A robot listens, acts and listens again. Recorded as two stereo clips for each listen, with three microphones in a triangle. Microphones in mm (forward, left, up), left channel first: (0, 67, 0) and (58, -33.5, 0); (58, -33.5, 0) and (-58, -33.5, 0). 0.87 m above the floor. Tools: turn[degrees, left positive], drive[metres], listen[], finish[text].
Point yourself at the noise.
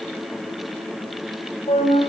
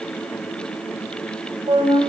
Thought: The flute: 140° left.
Action: turn[140]
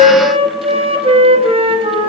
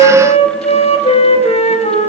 Thought: The flute is now 25° right.
Action: turn[-25]
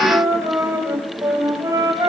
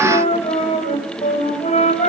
Action: finish[Facing the flute.]